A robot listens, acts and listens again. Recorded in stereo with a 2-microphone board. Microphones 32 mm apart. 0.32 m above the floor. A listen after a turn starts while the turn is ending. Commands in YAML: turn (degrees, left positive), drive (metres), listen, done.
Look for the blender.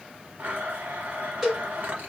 turn: -65
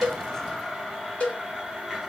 done: "Found it: a blender, straight ahead."